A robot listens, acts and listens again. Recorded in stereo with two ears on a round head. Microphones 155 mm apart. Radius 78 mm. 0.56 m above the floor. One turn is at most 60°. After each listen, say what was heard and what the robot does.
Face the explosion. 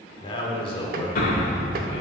The explosion: about 50° left or 130° left. Turn 50° left.
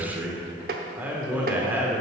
Keep listening.
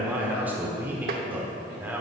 I heard an explosion, but can't make it out now. It was about straight ahead or 80° left.